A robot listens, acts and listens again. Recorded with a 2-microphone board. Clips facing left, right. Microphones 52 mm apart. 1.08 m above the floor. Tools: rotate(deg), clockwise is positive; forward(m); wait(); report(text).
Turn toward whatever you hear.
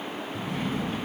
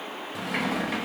rotate(90)
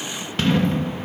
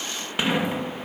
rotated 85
rotate(15)
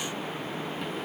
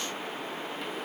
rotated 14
wait()
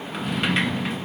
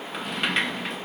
report("Facing the sliding door, 1 to 2 m away.")